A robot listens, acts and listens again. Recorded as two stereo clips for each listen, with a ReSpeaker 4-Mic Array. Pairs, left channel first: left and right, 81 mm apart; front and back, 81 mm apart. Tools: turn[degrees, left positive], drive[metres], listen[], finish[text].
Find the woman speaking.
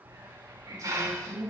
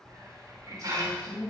Thought: The woman speaking: 45° right.
Action: turn[-45]
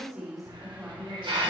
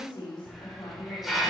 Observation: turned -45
Action: finish[Facing the woman speaking.]